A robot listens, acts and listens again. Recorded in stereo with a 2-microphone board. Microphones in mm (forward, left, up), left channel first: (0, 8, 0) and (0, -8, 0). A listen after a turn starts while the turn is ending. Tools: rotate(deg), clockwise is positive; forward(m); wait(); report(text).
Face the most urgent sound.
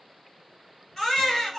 rotate(-20)
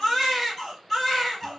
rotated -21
report("Found it: a baby crying, straight ahead, 2 to 4 m away.")